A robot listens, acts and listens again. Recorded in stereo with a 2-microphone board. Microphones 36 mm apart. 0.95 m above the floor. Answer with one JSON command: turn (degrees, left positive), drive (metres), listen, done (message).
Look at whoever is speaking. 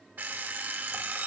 {"listen": true}
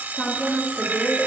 {"turn": 35}
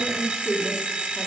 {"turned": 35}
{"done": "Facing the woman speaking."}